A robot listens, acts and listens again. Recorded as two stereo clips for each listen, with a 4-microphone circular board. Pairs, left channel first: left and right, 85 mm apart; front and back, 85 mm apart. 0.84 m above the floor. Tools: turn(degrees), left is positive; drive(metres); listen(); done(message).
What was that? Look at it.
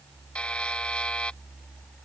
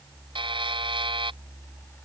turn(degrees=165)
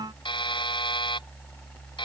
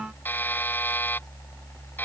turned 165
turn(degrees=65)
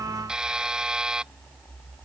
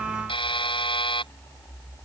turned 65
turn(degrees=-10)
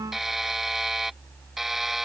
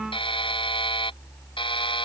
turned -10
done("Facing the buzzer.")